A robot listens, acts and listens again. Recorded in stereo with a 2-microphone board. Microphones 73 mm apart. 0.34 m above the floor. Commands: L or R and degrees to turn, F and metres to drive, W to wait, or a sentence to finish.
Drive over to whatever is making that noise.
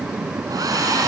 R55
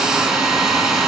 R10
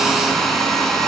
F1.0
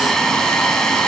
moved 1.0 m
F1.0
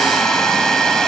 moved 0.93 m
L10
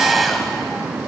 F1.0
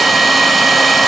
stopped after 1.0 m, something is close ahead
I am next to the hair dryer.